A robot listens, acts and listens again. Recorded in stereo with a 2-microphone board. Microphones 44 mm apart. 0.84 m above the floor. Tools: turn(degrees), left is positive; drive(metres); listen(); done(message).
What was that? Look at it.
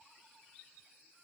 listen()
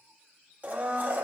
turn(degrees=-35)
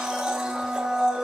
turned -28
turn(degrees=-10)
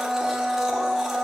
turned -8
done("Found it: a blender, straight ahead.")